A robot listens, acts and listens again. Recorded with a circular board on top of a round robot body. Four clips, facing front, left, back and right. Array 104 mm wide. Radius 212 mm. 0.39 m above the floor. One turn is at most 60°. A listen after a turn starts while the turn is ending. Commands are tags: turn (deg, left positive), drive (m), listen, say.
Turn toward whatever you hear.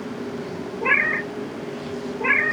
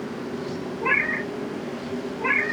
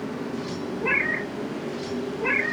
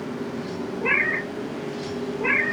<turn deg="-15"/>
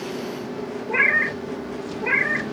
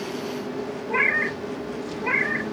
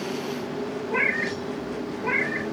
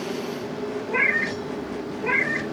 <say>Facing the cat meowing.</say>